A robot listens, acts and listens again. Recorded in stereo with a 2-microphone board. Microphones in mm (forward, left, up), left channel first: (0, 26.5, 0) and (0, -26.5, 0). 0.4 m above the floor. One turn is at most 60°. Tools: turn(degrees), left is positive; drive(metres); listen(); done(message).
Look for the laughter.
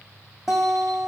listen()
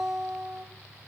listen()
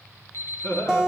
turn(degrees=55)
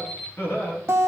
turn(degrees=50)
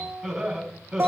turn(degrees=-15)
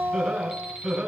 turn(degrees=-10)
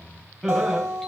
done("Facing the laughter, 2 to 4 m away.")